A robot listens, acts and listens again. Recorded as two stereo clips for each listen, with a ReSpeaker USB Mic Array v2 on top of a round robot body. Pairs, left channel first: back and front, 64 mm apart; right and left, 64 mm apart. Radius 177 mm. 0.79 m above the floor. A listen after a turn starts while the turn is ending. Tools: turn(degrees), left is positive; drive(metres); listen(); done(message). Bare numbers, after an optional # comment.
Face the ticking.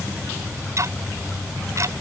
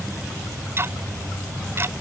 # The ticking: 40° left.
turn(40)
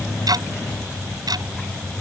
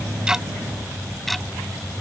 done("Facing the ticking.")